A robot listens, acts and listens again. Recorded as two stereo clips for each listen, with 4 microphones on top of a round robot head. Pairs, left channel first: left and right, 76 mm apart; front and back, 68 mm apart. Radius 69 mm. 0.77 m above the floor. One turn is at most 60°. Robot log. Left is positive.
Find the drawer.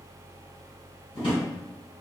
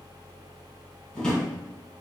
note: The drawer: 75° left.
cmd yaw +60
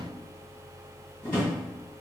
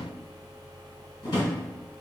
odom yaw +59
note: The drawer is now 15° left.
cmd yaw +15
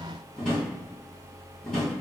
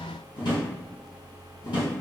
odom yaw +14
end: Found it: a drawer, straight ahead.